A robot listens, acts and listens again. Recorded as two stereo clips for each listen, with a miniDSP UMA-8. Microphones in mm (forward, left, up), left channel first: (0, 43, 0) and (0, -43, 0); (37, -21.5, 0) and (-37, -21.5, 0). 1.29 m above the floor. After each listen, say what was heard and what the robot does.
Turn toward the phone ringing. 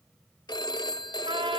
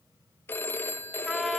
The phone ringing: 60° left. Turn 60° left.
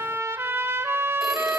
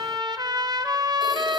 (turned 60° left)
Keep listening.
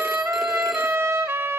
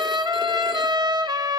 Keep listening.
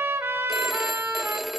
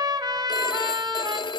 Facing the phone ringing.